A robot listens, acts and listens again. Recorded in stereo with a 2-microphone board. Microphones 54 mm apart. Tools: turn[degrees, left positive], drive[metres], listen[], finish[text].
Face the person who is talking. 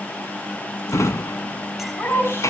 Thought: The woman speaking: about 45° left or 135° left.
Action: turn[45]
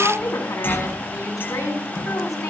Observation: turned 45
Thought: So it is at 90° left.
Action: turn[90]
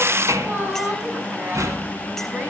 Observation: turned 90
Thought: The woman speaking is now 40° right.
Action: turn[-40]
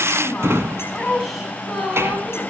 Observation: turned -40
Action: finish[Found it: a woman speaking, straight ahead.]